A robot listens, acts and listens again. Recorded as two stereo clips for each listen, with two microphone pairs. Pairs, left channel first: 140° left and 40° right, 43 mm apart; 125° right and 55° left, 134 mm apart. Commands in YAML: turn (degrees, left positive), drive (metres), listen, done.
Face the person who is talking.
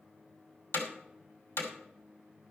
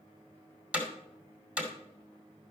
listen: true
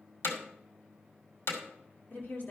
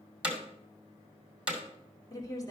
turn: 175
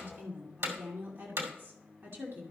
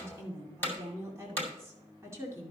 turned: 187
turn: -10
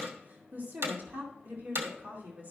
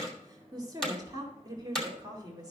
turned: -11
done: "Facing the woman speaking."